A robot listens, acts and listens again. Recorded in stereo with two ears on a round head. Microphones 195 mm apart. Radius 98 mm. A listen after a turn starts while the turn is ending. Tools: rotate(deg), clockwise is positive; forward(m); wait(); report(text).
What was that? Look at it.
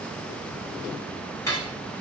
rotate(-30)
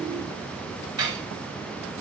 rotate(20)
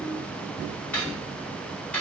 report("Facing the cutlery clinking.")